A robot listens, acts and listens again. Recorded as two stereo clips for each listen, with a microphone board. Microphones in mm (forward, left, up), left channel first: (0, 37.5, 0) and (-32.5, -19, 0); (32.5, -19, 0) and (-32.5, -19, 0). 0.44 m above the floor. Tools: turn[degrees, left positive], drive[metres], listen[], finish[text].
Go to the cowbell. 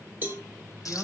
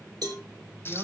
Thought: The cowbell: straight behind.
Action: turn[180]
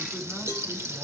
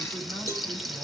Thought: The cowbell is now 40° left.
Action: turn[40]
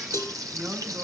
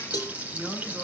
Thought: The cowbell is now 15° left.
Action: turn[15]
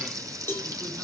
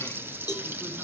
Action: drive[1.0]
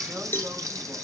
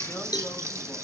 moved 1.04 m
Action: drive[1.0]
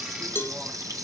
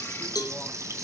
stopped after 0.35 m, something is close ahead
Thought: The cowbell is now 10° left.
Action: turn[10]
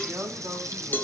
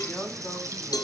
Action: finish[I am next to the cowbell.]